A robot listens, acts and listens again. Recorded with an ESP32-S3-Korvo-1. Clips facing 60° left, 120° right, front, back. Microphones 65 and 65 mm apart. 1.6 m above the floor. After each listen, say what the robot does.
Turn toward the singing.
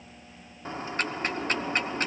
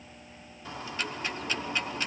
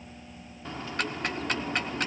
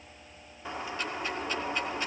Keep listening.
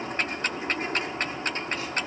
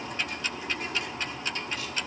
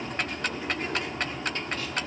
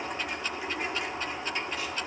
Keep listening.
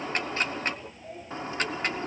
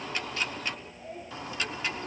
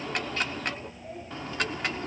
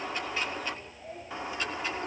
I can't make out singing, only ticking and a bird.